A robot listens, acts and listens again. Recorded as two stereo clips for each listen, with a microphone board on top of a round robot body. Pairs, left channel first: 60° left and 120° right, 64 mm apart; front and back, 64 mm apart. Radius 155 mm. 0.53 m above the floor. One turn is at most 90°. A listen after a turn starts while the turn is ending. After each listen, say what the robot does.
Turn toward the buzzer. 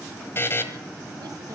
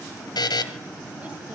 Found it: a buzzer, straight ahead.